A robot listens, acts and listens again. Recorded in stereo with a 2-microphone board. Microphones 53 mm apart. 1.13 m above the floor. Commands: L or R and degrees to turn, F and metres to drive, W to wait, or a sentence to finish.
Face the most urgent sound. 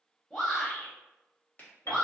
L30
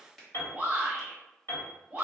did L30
R30
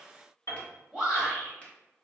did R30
Facing the shout, under 1 m away.